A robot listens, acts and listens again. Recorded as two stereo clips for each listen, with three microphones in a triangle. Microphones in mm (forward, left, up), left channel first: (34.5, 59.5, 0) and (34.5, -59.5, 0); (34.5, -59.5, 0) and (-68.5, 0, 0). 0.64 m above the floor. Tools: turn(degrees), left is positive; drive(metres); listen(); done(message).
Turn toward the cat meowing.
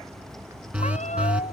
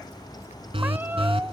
turn(degrees=75)
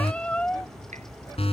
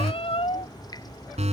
turn(degrees=10)
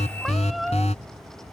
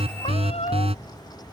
done("Found it: a cat meowing, straight ahead.")